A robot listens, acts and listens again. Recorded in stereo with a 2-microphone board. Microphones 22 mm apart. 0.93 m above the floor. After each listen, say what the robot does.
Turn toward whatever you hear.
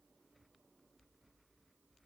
Keep listening.
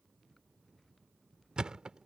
Turn 40° right.
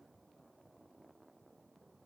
Keep listening.
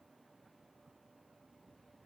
I heard a thud, but can't make it out now. It was about straight ahead or 100° right.